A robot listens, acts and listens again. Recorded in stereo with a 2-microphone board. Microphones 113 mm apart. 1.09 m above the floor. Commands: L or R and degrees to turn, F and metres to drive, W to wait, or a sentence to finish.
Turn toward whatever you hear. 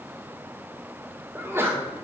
R20
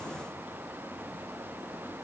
W
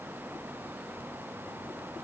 I heard a sneeze, but can't make it out now. It was about straight ahead or 140° right.